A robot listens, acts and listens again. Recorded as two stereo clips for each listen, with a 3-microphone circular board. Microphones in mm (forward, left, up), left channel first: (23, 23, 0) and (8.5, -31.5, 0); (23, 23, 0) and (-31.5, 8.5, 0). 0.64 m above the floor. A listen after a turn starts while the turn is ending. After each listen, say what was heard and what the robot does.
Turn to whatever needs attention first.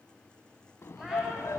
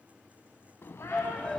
The shout: 95° left. Turn 95° left.
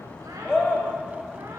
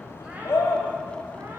Facing the shout, over 4 m away.